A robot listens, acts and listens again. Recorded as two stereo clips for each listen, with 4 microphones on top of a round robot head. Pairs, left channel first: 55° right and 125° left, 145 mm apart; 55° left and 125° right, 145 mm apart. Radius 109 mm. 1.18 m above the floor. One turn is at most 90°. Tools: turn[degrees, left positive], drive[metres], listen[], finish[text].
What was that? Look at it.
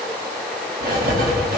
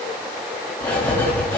Thought: The writing: 130° left.
Action: turn[90]
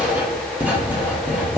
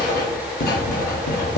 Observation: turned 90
Thought: The writing is now 45° left.
Action: turn[45]
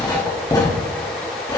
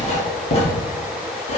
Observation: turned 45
Thought: The writing is now 10° left.
Action: turn[10]
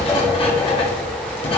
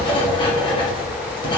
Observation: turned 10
Action: finish[Found it: writing, straight ahead.]